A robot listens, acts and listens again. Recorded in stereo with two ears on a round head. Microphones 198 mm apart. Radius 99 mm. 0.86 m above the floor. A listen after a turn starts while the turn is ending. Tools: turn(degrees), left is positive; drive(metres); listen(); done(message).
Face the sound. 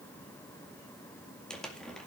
turn(degrees=30)
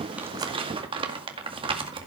turn(degrees=-25)
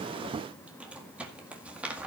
done("Found it: crumpling, straight ahead, 2 to 4 m away.")